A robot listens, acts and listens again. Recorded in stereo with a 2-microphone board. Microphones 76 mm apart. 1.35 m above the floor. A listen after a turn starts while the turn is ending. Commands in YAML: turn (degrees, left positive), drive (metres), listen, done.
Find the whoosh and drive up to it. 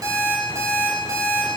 listen: true
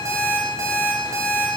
listen: true
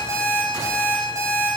done: "I can't make out a whoosh, only an alarm clock."